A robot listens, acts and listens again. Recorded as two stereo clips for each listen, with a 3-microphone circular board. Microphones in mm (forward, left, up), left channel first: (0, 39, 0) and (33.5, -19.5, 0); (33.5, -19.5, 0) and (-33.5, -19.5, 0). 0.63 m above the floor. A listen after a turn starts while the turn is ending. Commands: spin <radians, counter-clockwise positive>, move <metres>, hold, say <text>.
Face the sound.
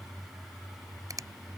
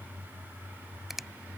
spin -1.66
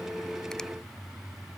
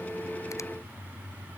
hold
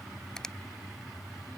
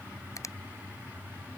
spin 0.70
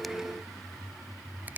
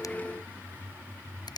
say Facing the finger snap.